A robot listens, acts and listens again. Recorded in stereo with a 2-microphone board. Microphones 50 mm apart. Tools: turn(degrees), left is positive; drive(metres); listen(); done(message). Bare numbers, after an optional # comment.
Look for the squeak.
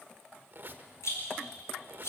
# The squeak: about 45° right or 135° right.
turn(-45)
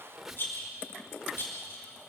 # So it is at 10° right.
turn(-10)
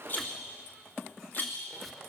done("Found it: a squeak, straight ahead.")